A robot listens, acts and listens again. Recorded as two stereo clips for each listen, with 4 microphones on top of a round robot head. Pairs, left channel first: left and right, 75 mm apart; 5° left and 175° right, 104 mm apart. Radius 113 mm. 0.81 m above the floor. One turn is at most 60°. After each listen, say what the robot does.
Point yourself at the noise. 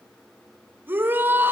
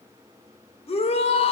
Turn 25° right.
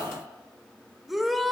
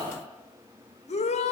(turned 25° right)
Facing the shout.